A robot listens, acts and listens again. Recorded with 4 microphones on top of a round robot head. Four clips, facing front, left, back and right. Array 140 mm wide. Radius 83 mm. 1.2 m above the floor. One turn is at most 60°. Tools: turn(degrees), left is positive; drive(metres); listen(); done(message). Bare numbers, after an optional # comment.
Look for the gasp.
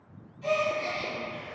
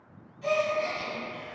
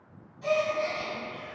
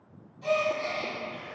# The gasp: 140° right.
turn(-60)
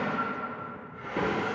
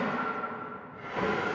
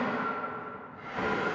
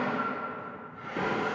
# Nothing new. It was at 80° right.
turn(-60)
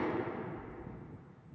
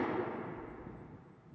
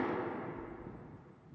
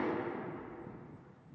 # Nothing new. It was at 20° right.
turn(-20)
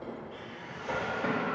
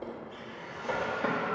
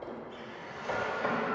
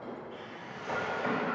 done("Facing where the gasp came from. I can't hear it now.")